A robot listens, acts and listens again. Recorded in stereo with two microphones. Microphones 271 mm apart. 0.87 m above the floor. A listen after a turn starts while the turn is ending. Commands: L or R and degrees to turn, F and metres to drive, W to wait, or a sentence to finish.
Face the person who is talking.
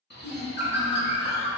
L70
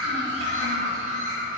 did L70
W
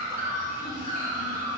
W
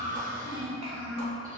L35
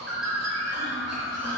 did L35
W
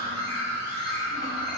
W
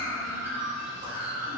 I heard a child speaking from this way, but can't make it out now.